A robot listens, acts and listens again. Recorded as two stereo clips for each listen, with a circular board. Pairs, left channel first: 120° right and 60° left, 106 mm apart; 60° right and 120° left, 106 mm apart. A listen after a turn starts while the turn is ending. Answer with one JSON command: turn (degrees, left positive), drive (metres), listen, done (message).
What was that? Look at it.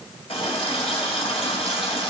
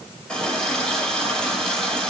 {"turn": -140}
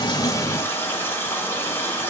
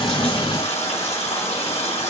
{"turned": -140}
{"turn": -50}
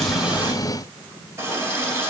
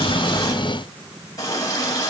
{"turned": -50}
{"done": "Facing the running tap."}